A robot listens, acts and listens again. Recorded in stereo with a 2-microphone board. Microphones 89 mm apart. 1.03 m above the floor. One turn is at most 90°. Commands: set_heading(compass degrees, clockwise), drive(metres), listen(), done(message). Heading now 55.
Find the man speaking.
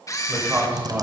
set_heading(75)
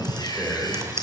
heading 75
done("Found it: a man speaking, straight ahead.")